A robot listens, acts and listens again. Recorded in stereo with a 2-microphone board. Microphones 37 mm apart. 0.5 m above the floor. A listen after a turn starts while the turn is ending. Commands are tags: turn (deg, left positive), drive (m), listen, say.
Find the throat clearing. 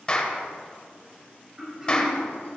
<turn deg="-20"/>
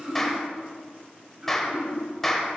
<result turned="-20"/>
<turn deg="-140"/>
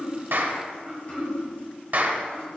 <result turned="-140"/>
<say>Found it: throat clearing, straight ahead, over 4 m away.</say>